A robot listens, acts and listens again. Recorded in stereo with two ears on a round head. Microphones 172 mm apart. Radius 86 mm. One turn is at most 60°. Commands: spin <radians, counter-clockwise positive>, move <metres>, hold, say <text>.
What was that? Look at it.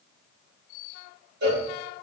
spin -1.05
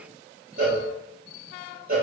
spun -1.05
spin -0.87
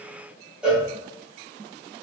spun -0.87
say Found it: a cowbell, straight ahead, 1 to 2 m away.